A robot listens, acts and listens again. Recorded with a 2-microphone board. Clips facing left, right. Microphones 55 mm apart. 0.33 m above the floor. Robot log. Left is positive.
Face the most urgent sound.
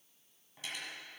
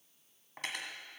cmd idle
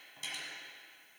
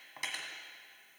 cmd idle
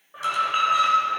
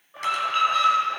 note: The alarm: about 15° left or 165° left.
cmd yaw +15
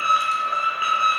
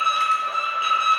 note: So it is at 150° left.
cmd yaw +150
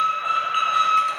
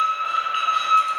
note: The alarm is now 10° left.
cmd yaw +10
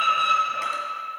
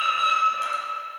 end: Facing the alarm, 2 to 4 m away.